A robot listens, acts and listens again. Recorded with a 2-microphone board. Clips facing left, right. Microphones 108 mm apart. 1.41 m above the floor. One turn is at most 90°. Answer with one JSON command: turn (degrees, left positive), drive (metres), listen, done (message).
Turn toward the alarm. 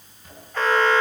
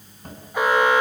{"turn": -30}
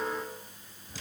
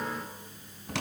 {"listen": true}
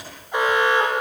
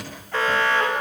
{"turn": 15}
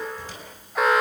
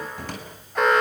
{"done": "Facing the alarm, over 4 m away."}